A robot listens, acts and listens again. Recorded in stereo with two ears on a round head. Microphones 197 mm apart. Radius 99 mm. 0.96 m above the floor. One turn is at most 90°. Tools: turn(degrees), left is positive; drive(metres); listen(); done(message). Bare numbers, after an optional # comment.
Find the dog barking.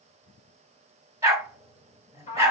turn(-30)
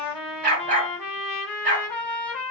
# So it is at 135° right.
turn(-90)
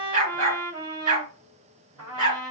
# The dog barking is now 35° right.
turn(-35)
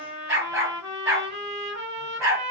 # The dog barking is now 15° right.
turn(-15)
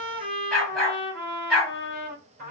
done("Facing the dog barking.")